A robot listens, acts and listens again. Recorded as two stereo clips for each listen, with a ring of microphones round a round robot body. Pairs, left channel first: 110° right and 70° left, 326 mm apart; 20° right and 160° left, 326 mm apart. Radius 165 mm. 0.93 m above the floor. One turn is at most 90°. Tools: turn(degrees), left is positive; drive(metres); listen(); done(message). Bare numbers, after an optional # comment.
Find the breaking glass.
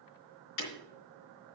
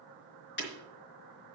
# The breaking glass: 80° right.
turn(-80)
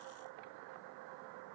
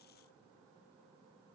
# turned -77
done("Facing where the breaking glass came from. I can't hear it now.")